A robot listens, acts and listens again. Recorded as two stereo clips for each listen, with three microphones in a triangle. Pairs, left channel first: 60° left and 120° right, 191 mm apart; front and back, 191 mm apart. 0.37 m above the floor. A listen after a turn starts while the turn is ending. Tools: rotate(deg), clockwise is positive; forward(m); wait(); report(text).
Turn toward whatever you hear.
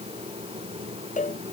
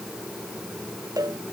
rotate(-110)
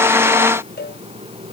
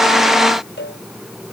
rotate(-30)
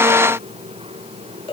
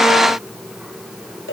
report("Facing the cowbell.")